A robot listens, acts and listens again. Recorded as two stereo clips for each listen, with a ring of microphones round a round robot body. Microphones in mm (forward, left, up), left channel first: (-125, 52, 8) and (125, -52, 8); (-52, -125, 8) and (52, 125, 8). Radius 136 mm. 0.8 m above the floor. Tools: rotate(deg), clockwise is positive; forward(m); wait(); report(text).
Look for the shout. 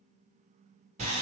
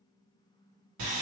wait()
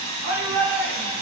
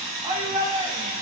report("Found it: a shout, straight ahead, 1 to 2 m away.")